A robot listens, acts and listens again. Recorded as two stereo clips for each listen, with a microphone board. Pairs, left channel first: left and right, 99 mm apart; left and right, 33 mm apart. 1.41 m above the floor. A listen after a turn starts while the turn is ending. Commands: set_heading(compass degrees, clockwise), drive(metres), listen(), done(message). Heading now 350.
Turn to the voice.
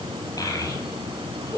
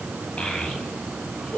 set_heading(315)
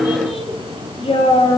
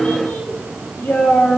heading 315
set_heading(200)
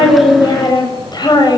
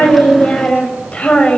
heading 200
set_heading(155)
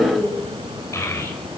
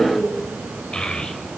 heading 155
set_heading(125)
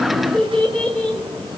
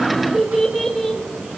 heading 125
set_heading(115)
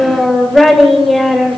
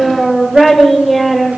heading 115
done("Found it: a child speaking, straight ahead.")